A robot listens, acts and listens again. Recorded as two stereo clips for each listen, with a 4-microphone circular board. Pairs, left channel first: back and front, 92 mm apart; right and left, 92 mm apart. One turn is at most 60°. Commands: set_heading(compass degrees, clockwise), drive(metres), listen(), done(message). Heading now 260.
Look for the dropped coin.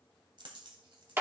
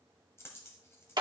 set_heading(290)
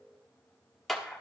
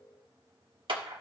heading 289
done("I heard a dropped coin from this way, but can't make it out now.")